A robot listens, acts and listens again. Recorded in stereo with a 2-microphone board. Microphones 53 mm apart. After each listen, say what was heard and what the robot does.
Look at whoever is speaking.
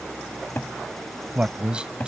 The man speaking: about 20° right or 160° right. Turn 20° right.
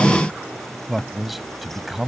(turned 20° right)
Facing the man speaking.